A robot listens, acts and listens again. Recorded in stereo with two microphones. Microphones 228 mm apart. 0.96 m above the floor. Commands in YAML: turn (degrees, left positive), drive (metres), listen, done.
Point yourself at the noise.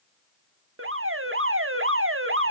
turn: -70
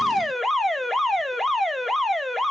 done: "Found it: an alarm, straight ahead, 1 to 2 m away."